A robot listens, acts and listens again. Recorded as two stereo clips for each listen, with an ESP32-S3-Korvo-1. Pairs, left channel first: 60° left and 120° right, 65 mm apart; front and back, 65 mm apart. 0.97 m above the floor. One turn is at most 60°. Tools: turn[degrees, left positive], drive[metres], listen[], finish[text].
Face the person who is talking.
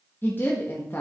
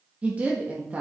Thought: The woman speaking: 115° left.
Action: turn[60]
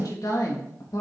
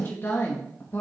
Thought: The woman speaking is now 50° left.
Action: turn[50]
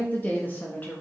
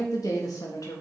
Action: finish[Found it: a woman speaking, straight ahead, 1 to 2 m away.]